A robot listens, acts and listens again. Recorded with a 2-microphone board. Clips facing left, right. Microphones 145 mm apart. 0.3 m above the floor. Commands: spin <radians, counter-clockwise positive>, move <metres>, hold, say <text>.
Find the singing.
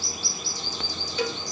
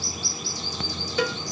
hold
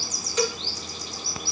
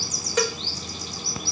hold
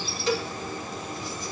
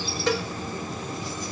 say I can't make out singing, only a cowbell.